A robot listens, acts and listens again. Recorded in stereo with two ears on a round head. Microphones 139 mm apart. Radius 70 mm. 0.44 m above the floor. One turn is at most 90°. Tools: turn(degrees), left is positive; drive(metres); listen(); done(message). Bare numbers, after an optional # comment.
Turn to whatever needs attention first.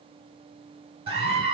# The scream: about 40° right or 140° right.
turn(-40)
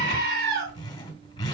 # So it is at 100° right.
turn(-90)
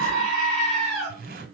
done("Facing the scream, over 4 m away.")